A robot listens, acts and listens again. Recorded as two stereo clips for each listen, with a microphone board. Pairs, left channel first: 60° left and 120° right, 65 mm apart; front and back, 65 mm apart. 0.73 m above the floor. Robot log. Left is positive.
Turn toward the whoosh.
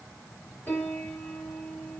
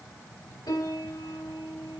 cmd idle
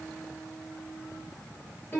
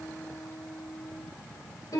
cmd idle
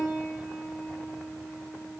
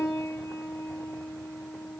end: I can't make out a whoosh to turn to.